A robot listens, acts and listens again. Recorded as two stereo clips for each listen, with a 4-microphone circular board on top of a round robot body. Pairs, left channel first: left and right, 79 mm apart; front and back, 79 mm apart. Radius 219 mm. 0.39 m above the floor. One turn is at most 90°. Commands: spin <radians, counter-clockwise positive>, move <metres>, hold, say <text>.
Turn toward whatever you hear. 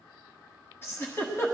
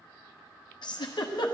spin 0.44
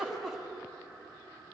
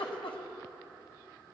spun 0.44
say Found it: a giggle, straight ahead, 1 to 2 m away.